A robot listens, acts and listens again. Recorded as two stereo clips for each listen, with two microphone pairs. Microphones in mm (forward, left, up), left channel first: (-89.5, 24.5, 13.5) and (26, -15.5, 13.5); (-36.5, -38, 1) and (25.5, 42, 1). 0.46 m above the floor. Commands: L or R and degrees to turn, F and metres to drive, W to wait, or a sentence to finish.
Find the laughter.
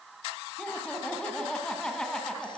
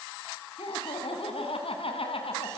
R115
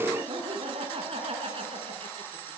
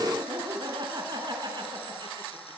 L15
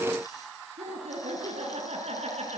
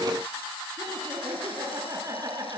Facing the laughter, over 4 m away.